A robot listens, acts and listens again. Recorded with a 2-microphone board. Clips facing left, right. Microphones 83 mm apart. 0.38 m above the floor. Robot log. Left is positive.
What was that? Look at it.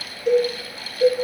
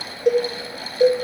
note: The cowbell: about 70° right or 110° right.
cmd yaw -70
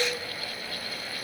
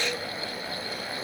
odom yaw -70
cmd idle
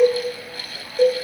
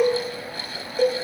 end: Facing the cowbell.